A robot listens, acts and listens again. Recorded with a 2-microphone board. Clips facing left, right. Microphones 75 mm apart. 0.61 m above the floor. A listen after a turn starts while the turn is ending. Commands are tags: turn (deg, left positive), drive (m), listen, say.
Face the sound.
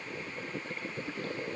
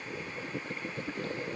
<listen/>
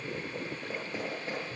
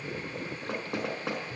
<turn deg="-90"/>
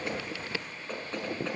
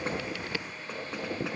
<turn deg="-10"/>
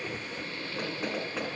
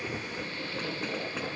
<say>Facing the knocking.</say>